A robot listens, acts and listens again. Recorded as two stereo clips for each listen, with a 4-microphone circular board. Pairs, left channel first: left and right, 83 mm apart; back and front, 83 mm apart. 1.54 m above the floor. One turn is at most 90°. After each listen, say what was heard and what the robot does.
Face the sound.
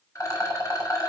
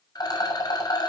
The rattle: 140° left. Turn 90° left.
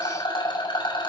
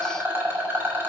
The rattle is now 65° left. Turn 65° left.
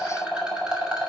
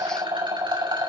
The rattle is now 10° right. Turn 10° right.
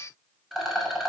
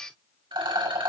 Found it: a rattle, straight ahead, over 4 m away.